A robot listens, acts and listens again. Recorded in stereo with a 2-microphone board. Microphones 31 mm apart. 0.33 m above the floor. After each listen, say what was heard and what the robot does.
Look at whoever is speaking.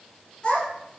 The child speaking: about 30° left or 150° left. Turn 30° left.
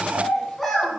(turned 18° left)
Facing the child speaking, 1 to 2 m away.